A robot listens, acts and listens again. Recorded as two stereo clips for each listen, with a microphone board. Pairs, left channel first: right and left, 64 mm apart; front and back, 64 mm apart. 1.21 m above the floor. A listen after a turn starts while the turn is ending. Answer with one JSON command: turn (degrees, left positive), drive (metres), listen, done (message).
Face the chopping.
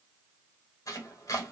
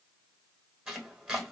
{"turn": -100}
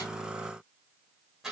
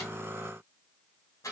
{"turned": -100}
{"turn": 10}
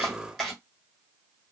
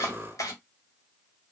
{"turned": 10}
{"done": "Facing the chopping, 1 to 2 m away."}